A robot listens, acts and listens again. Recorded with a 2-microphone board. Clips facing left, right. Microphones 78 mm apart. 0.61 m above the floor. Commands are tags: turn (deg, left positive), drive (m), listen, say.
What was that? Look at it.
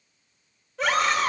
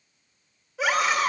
<turn deg="-30"/>
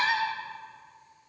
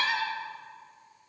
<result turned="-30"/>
<turn deg="25"/>
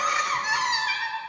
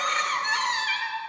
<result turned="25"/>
<turn deg="10"/>
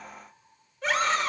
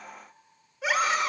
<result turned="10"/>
<say>Facing the scream.</say>